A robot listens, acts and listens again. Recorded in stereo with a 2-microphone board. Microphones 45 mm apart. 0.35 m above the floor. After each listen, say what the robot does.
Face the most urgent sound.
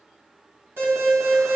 Turn 60° right.
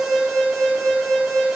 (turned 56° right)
Turn 10° right.
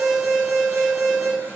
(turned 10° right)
Found it: an alarm, straight ahead, 2 to 4 m away.